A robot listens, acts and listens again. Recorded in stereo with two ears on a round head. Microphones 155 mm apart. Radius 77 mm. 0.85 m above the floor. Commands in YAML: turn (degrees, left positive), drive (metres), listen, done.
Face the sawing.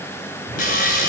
turn: 50
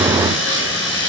turn: 80
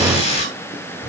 turn: 40
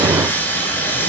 turn: 10
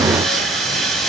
done: "Found it: sawing, straight ahead."